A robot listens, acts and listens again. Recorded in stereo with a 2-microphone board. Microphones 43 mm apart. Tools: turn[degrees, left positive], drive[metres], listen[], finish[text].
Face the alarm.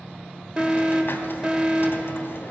Thought: The alarm: about 25° right or 155° right.
Action: turn[-25]
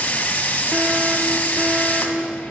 Action: listen[]
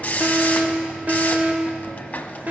Thought: So it is at 125° right.
Action: turn[-125]
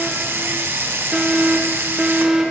Action: finish[Found it: an alarm, straight ahead, under 1 m away.]